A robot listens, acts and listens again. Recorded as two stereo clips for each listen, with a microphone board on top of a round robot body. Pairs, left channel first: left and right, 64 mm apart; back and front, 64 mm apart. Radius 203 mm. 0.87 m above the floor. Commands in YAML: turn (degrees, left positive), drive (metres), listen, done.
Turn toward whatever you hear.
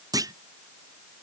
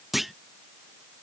turn: -85
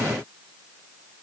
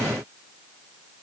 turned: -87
done: "I heard a clunk from this way, but can't make it out now."